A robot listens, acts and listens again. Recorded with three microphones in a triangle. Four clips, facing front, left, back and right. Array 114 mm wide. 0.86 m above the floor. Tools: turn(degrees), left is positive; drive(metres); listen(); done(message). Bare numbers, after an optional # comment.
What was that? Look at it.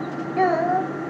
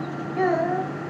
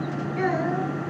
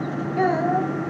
done("Facing the child speaking.")